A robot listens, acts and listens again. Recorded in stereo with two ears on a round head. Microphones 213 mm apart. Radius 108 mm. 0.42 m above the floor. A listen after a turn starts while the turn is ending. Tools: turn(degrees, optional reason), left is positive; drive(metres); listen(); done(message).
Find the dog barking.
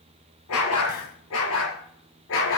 turn(degrees=55, reason="The dog barking: about 55° left or 125° left.")
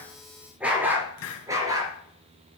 turn(degrees=-15, reason="So it is at 15° right.")
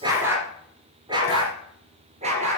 turn(degrees=-30, reason="The dog barking is now 30° right.")
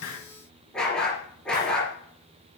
done("Facing the dog barking, 2 to 4 m away.")